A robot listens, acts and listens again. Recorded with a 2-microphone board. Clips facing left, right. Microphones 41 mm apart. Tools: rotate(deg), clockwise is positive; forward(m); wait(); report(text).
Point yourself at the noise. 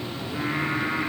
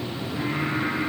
rotate(-40)
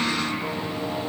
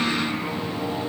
rotate(-90)
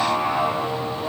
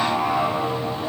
report("Found it: singing, straight ahead.")